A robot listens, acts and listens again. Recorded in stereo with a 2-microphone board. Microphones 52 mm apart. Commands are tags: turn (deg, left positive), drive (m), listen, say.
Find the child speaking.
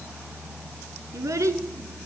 <turn deg="-90"/>
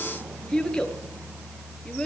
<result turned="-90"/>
<turn deg="10"/>
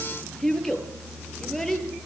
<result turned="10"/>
<say>Found it: a child speaking, straight ahead, over 4 m away.</say>